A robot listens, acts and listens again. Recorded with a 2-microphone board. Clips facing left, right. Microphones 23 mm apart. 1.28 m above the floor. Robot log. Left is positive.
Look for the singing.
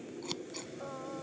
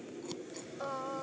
note: The singing: about 70° right or 110° right.
cmd yaw -70
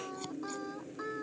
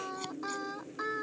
note: So it is at 45° right.
cmd yaw -45
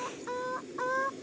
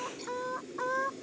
end: Facing the singing.